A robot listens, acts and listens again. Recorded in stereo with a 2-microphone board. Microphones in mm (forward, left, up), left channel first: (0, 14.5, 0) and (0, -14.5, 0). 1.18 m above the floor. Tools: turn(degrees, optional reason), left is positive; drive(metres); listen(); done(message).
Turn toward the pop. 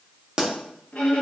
turn(degrees=-35, reason="The pop: about 35° right or 145° right.")
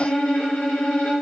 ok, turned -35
listen()
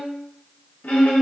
done("I heard a pop, but can't make it out now. It was about straight ahead or 110° right.")